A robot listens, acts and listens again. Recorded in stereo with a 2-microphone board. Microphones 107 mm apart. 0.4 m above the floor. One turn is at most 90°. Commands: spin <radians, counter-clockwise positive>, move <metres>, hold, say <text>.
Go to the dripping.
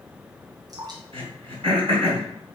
spin -0.61
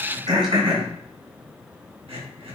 hold
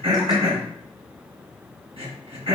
hold
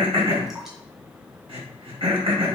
say I heard dripping, but can't make it out now. It was about straight ahead or 110° right. I did not reach it.